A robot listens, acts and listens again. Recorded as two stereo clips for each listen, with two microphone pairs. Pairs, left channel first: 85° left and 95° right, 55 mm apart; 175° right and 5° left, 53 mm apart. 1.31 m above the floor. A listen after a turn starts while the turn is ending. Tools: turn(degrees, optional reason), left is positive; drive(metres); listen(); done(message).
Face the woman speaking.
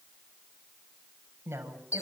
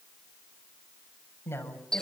turn(degrees=-140, reason="The woman speaking: 140° right.")
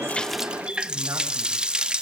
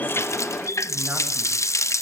listen()
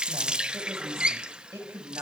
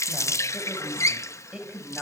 turn(degrees=-70, reason="The woman speaking is now 70° right.")
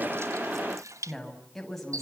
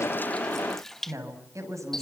done("Facing the woman speaking, over 4 m away.")